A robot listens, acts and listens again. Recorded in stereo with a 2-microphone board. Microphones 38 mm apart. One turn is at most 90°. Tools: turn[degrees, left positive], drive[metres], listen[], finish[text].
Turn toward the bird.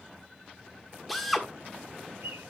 Action: turn[-90]
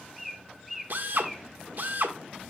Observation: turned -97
Action: finish[Found it: a bird, straight ahead.]